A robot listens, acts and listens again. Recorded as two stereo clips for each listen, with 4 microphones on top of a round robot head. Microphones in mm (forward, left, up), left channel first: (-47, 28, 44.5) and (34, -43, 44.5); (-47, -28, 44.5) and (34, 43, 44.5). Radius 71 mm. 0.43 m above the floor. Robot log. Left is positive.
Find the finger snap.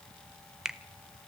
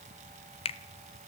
note: The finger snap: 125° right.
cmd yaw -125
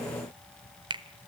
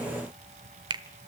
end: Facing the finger snap, 1 to 2 m away.